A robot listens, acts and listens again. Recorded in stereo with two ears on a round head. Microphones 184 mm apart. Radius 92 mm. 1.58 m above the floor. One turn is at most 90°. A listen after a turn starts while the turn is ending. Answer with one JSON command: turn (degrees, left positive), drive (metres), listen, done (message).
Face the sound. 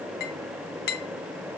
{"turn": 50}
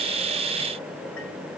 {"listen": true}
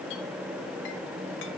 {"listen": true}
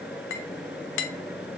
{"turn": 75}
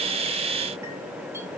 {"listen": true}
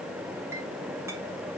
{"listen": true}
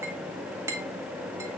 {"turn": -15}
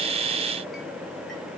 {"listen": true}
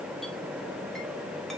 {"listen": true}
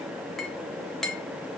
{"done": "Found it: a clink, straight ahead."}